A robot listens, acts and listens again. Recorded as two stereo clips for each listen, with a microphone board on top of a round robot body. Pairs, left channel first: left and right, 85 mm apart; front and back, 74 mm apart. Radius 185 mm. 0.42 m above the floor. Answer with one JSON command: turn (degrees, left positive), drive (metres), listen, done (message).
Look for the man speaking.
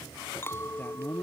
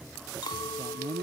{"turn": 160}
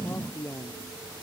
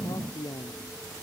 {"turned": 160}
{"turn": 30}
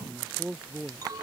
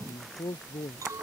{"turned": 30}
{"turn": -10}
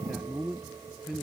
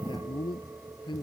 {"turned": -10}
{"done": "Found it: a man speaking, straight ahead."}